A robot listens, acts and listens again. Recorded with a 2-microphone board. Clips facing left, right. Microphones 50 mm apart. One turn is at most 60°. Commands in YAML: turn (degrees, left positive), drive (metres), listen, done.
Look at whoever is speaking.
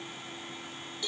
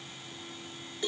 listen: true
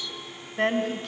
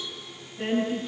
turn: 60
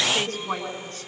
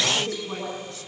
turn: 40
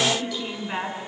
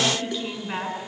done: "Facing the woman speaking, over 4 m away."